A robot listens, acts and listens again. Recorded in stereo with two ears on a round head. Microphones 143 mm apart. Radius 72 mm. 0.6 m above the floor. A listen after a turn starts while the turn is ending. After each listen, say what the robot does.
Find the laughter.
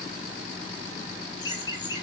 Turn 25° left.
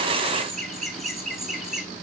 Facing the laughter.